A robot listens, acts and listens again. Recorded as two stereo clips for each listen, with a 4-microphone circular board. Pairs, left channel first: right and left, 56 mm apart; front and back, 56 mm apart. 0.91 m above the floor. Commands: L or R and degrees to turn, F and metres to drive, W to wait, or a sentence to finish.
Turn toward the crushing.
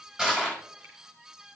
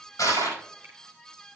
L10
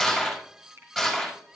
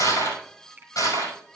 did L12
Found it: crushing, straight ahead, over 4 m away.